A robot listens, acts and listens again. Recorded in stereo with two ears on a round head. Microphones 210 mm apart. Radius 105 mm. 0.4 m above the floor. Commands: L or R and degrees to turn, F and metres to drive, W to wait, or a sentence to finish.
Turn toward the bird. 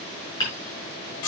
W
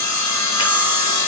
W
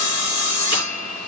I can't make out a bird to turn to.